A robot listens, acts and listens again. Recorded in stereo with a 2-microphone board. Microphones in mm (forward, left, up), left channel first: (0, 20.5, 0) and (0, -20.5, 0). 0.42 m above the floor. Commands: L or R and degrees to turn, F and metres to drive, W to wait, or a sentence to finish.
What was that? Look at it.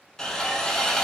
L30
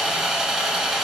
R15
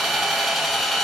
Found it: sawing, straight ahead, under 1 m away.